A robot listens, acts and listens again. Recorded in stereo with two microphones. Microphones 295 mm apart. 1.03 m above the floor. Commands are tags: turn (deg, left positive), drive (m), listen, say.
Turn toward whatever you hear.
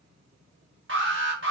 <turn deg="-45"/>
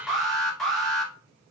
<say>Facing the alarm.</say>